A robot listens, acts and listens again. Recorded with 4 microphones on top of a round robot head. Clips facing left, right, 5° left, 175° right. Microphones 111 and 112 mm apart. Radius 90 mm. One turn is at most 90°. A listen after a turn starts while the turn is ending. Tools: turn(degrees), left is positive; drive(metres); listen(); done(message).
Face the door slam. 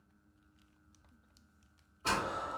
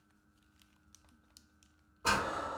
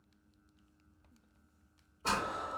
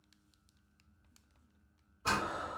turn(degrees=-45)
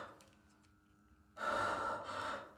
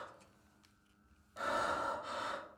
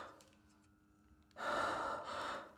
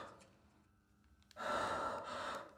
done("Facing where the door slam came from. I can't hear it now.")